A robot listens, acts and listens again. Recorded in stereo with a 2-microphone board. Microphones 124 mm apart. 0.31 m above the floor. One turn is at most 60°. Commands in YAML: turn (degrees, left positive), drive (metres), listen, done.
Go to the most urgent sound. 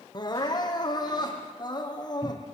turn: 35
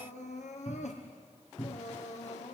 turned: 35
turn: 60
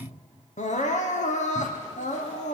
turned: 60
turn: 60
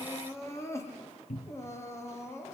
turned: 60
turn: 20
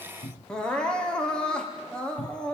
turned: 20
drive: 1.0
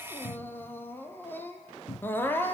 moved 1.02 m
turn: 15
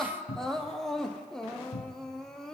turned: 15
drive: 1.0
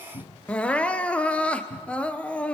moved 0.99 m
turn: 10
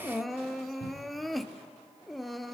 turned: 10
drive: 1.0
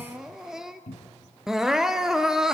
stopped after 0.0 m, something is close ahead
done: "I am next to the crying."